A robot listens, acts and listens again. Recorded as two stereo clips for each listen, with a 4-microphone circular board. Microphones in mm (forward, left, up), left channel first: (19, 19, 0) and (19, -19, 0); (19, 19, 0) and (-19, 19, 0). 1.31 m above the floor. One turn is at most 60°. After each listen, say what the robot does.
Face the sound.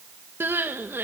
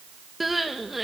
Turn 60° right.
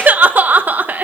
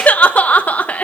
Turn 55° right.
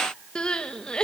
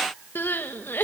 Turn 25° left.
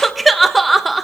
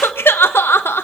Found it: crying, straight ahead, 1 to 2 m away.